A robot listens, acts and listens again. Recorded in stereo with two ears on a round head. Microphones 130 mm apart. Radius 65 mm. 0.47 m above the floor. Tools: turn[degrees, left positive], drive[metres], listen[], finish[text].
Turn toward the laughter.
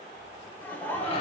Thought: The laughter: about 15° left or 165° left.
Action: turn[15]
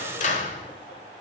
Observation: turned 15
Action: listen[]
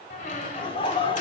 Thought: The laughter: about 35° left or 145° left.
Action: turn[35]
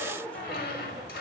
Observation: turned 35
Thought: So it is at 10° left.
Action: turn[10]
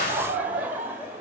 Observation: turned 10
Thought: The laughter is now 15° right.
Action: turn[-15]
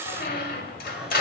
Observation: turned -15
Action: listen[]
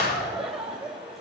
Action: finish[Facing the laughter, 2 to 4 m away.]